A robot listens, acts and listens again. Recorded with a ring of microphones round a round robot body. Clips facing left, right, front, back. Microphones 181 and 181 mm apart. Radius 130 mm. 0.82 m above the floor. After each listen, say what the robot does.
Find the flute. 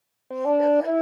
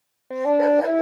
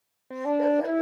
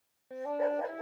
Found it: a flute, straight ahead.